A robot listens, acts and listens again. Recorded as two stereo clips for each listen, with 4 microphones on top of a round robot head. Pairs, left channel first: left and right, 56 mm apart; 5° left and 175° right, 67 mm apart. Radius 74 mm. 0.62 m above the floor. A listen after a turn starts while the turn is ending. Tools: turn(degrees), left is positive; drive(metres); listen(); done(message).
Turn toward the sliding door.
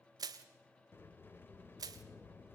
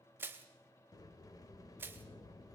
turn(degrees=35)
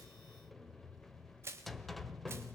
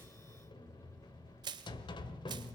done("Found it: a sliding door, straight ahead.")